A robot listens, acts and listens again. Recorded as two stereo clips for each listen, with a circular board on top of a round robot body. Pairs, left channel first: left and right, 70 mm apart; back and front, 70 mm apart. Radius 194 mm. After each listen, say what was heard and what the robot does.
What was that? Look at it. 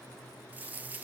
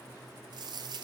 The dropped coin: 20° right. Turn 20° right.
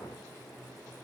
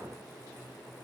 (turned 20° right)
Facing where the dropped coin came from. I can't hear it now.